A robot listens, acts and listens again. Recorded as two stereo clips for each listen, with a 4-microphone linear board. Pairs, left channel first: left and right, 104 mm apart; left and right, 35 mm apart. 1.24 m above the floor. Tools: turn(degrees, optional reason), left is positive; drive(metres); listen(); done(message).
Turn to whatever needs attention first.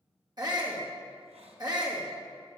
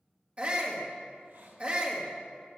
turn(degrees=-40, reason="The shout: about 40° right or 140° right.")
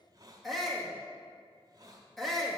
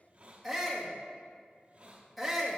done("Facing the shout, 1 to 2 m away.")